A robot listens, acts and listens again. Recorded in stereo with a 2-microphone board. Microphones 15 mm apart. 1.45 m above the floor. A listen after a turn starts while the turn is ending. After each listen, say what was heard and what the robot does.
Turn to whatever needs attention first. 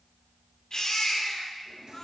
The baby crying: about 45° left or 135° left. Turn 45° left.
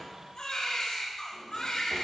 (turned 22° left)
So it is at 110° left. Turn 110° left.
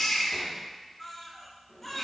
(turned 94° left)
The baby crying is now 15° left. Turn 15° left.
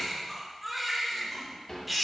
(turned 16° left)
Facing the baby crying.